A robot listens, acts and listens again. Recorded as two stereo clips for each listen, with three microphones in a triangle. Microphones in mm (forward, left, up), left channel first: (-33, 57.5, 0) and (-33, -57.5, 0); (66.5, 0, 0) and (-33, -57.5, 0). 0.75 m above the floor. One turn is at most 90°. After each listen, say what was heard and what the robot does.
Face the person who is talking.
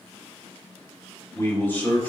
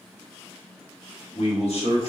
The man speaking: 20° left. Turn 20° left.
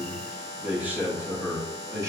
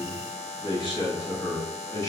The man speaking is now 30° right. Turn 30° right.
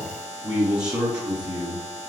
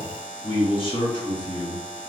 The man speaking is now 15° right. Turn 15° right.
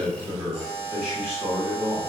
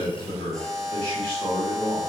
Facing the man speaking.